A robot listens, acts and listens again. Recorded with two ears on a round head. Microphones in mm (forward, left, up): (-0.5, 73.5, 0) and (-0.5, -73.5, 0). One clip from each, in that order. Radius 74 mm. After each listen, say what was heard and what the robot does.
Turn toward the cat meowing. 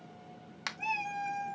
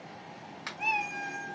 The cat meowing: about 20° right or 160° right. Turn 20° right.
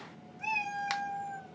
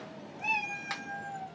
Facing the cat meowing.